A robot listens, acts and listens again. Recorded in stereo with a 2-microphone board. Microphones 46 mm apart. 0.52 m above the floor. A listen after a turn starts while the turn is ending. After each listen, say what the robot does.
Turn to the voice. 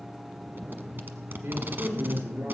Turn 90° right.
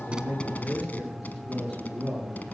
Facing the man speaking, over 4 m away.